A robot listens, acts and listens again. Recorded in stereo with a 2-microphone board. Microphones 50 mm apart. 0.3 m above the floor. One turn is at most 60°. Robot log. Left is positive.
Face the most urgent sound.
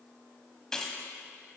cmd idle
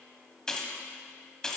cmd idle
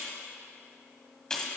end: I can't make out anything urgent to turn to.